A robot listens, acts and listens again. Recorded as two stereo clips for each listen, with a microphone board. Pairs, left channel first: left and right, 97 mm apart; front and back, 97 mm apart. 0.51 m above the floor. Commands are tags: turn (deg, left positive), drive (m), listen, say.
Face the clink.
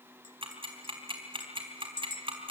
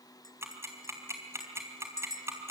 <turn deg="55"/>
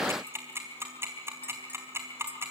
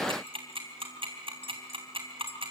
<turn deg="15"/>
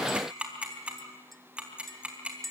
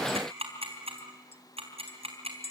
<say>Facing the clink, 1 to 2 m away.</say>